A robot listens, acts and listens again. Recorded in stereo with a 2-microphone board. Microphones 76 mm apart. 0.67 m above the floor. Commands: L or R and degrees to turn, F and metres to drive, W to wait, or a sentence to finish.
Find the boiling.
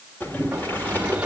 L25
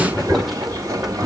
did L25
Facing the boiling, 2 to 4 m away.